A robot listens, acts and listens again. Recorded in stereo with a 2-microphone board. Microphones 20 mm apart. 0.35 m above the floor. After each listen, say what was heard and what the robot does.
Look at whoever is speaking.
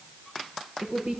The woman speaking: about 70° right or 110° right. Turn 70° right.
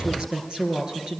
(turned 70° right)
So it is at 35° right. Turn 35° right.
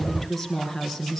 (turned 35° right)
Found it: a woman speaking, straight ahead.